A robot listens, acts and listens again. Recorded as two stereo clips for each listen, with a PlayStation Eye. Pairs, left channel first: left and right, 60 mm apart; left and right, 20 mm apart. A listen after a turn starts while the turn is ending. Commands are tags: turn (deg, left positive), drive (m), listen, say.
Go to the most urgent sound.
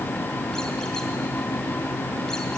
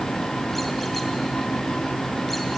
<listen/>
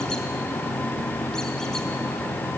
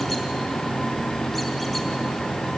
<listen/>
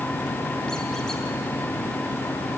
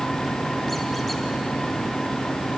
<say>I can't make out anything urgent to turn to.</say>